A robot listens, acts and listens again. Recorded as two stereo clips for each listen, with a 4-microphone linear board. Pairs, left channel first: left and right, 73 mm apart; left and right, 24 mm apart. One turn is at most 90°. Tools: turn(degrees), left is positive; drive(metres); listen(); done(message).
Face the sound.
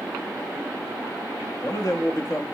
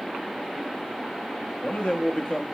turn(degrees=45)
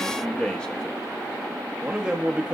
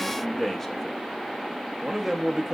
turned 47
turn(degrees=-15)
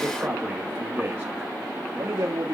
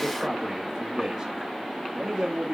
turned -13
turn(degrees=-30)
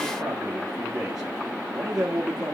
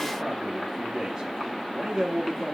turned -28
turn(degrees=-10)
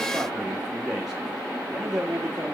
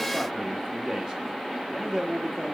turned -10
done("Facing the man speaking, 1 to 2 m away.")